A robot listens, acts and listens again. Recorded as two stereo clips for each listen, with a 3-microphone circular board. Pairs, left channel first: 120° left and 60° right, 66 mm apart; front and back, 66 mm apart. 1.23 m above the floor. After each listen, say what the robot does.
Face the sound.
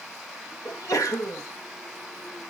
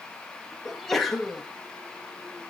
Turn 85° left.
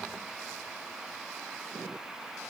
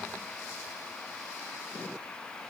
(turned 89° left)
Facing where the sneeze came from. I can't hear it now.